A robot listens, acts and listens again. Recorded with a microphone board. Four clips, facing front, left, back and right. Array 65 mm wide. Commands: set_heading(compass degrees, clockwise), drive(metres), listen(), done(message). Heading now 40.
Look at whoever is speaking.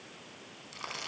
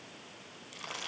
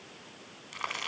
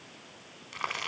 listen()
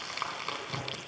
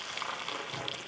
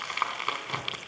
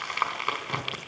listen()
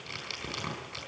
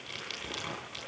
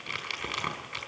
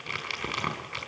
done("I can't make out anyone speaking, only crumpling.")